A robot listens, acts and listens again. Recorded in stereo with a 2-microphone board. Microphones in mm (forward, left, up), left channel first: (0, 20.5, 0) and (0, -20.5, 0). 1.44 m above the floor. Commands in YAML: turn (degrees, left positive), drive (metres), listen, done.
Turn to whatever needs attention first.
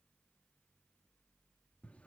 listen: true
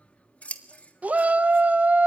turn: -40
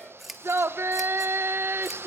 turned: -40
turn: -100
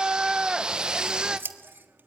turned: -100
turn: -20
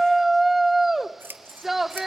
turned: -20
done: "Facing the shout, 1 to 2 m away."